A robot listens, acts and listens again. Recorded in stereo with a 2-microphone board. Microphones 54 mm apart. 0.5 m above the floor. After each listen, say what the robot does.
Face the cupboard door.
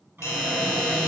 Turn 45° right.
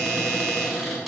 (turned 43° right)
Found it: a cupboard door, straight ahead.